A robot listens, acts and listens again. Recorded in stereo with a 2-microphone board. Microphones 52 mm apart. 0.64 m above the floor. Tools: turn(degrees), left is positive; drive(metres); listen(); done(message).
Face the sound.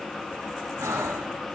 turn(degrees=-90)
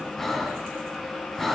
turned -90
done("Facing the breathing, 1 to 2 m away.")